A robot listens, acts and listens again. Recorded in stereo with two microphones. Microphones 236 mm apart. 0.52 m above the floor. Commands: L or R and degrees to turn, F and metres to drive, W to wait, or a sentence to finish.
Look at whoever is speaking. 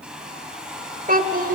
R35
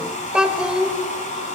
Found it: a child speaking, straight ahead.